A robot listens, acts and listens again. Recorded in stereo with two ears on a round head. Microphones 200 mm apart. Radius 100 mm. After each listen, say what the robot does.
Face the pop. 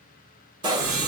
Turn 20° right.
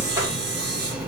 Keep listening.
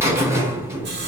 I heard a pop, but can't make it out now. It was about straight ahead or 140° right.